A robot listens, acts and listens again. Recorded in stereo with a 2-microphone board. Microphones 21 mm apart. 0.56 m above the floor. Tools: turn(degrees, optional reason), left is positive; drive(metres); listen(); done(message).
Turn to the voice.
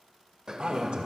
turn(degrees=-60, reason="The man speaking: about 60° right or 120° right.")
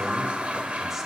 listen()
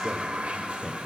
listen()
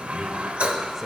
turn(degrees=-20, reason="So it is at 20° right.")
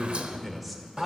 done("Facing the man speaking, 1 to 2 m away.")